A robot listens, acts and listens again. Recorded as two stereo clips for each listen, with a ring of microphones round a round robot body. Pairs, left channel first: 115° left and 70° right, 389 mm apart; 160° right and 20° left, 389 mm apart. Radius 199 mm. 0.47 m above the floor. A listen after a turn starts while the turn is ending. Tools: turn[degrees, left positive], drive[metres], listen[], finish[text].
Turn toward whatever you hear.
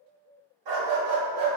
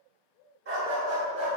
Thought: The dog barking: 30° right.
Action: turn[-30]
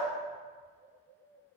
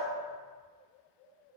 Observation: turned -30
Action: listen[]
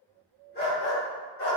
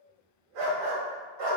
Thought: The dog barking is now 55° left.
Action: turn[55]
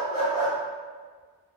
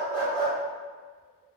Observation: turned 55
Action: listen[]
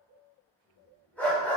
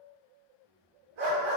Thought: The dog barking is now 25° left.
Action: turn[25]
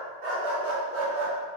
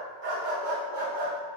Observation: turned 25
Thought: The dog barking is now 15° right.
Action: turn[-15]
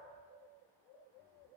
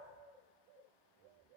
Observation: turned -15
Action: listen[]
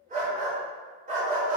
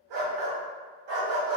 Action: finish[Facing the dog barking, 1 to 2 m away.]